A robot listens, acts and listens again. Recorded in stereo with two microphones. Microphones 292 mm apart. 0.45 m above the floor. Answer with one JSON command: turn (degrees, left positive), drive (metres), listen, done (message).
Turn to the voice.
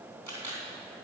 {"listen": true}
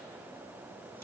{"listen": true}
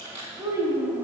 {"turn": -30}
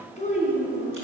{"turn": 30}
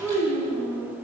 {"done": "Found it: a child speaking, straight ahead."}